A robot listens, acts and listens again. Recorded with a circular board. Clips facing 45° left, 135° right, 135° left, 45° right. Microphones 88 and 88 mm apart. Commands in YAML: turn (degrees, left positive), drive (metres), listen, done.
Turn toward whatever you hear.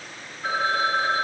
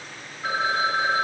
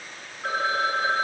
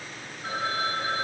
turn: 150
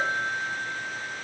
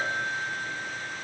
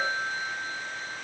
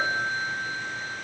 turn: 40
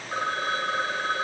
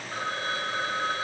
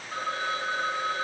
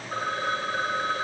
turn: 10
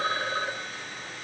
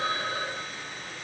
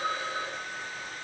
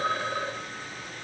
done: "Found it: a phone ringing, straight ahead, 1 to 2 m away."